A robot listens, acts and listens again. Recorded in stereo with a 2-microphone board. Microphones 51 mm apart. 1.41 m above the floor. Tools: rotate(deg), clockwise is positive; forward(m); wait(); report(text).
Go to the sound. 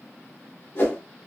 rotate(-55)
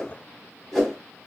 forward(1.0)
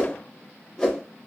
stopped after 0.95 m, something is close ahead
rotate(-15)
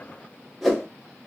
report("Arrived at the whoosh, straight ahead.")